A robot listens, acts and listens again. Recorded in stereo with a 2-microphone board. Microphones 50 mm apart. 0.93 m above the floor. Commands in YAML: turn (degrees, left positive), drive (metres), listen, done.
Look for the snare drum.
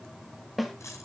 turn: -30
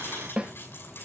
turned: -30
turn: -150
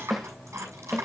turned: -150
done: "Found it: a snare drum, straight ahead."